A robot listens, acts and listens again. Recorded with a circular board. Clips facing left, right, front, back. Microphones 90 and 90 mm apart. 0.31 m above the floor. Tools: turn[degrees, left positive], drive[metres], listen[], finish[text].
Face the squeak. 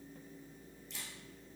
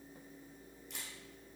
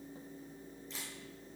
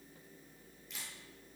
Action: listen[]
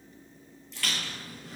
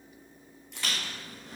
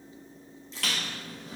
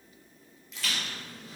Thought: The squeak: 20° right.
Action: turn[-20]
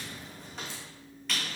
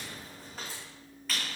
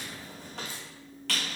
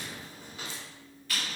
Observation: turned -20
Action: finish[Facing the squeak.]